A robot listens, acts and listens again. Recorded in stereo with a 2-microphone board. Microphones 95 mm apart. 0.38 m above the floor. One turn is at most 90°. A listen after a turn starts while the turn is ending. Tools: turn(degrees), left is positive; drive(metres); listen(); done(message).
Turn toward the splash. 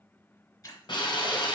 turn(degrees=40)
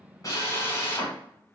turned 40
listen()
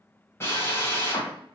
done("I heard a splash, but can't make it out now. It was about straight ahead or 100° left.")